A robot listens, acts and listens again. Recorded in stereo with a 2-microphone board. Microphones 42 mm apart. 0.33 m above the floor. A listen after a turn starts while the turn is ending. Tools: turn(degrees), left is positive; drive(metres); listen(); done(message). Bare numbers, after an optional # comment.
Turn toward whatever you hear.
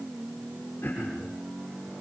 # The throat clearing: about 40° left or 140° left.
turn(40)
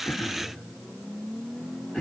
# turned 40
done("Facing the throat clearing, over 4 m away.")